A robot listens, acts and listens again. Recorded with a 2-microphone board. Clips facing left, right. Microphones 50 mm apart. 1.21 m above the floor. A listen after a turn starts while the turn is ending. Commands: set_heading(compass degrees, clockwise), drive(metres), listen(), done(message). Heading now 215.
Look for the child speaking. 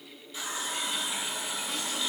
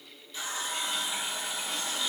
listen()
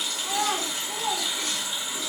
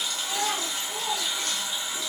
set_heading(145)
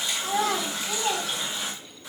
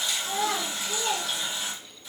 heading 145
set_heading(105)
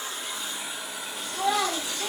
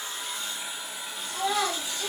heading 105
done("Facing the child speaking, 1 to 2 m away.")